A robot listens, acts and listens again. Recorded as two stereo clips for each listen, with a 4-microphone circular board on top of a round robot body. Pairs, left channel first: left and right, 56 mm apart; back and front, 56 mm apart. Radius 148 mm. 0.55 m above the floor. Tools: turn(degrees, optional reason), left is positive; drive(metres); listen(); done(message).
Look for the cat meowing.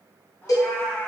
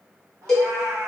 turn(degrees=35, reason="The cat meowing: 35° left.")
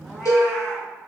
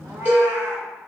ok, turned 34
done("Found it: a cat meowing, straight ahead, under 1 m away.")